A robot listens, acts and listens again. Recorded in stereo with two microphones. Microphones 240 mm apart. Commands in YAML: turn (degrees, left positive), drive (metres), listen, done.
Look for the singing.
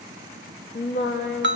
turn: 45
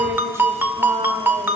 listen: true
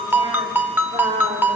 turn: -25
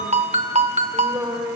turn: -10
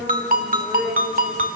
done: "Facing the singing, over 4 m away."